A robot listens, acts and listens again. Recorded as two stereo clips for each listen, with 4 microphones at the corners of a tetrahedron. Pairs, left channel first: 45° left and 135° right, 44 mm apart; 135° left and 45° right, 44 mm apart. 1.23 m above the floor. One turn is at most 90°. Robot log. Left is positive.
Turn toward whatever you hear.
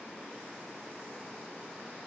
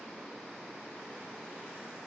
cmd idle
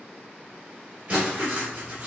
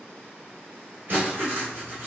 note: The writing: 85° right.
cmd yaw -85
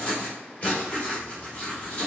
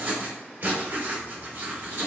note: The writing is now 15° right.
cmd yaw -15
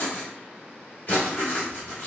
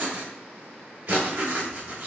end: Found it: writing, straight ahead.